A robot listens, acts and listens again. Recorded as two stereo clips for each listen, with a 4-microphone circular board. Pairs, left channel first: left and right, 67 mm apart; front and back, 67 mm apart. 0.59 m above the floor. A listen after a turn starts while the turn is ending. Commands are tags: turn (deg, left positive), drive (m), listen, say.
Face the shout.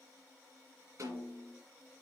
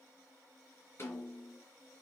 <listen/>
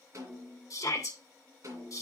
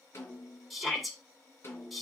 <turn deg="90"/>
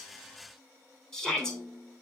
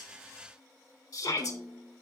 <turn deg="10"/>
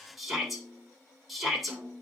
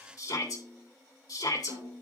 <say>Found it: a shout, straight ahead, 2 to 4 m away.</say>